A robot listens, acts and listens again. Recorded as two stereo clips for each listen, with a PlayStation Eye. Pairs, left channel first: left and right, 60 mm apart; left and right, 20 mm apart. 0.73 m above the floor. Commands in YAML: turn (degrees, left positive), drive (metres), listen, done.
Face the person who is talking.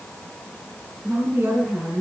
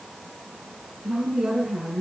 turn: -35
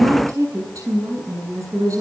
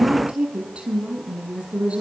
turn: -110
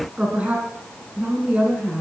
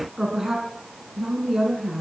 turn: -25
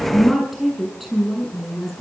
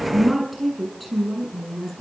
done: "Found it: a woman speaking, straight ahead, over 4 m away."